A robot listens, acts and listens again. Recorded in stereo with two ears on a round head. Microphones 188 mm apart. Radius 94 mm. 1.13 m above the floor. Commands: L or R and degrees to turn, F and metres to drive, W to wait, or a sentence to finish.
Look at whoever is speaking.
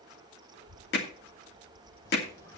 R60
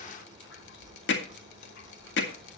Found it: a child speaking, straight ahead.